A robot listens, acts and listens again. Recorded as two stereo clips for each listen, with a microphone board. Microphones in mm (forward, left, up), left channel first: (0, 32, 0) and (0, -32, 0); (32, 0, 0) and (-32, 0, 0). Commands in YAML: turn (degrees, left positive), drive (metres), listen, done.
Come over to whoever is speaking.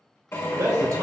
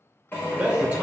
turn: -110
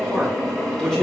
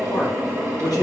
drive: 1.0
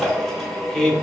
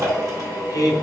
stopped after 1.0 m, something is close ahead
turn: 10
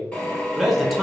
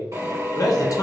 done: "I am next to the man speaking."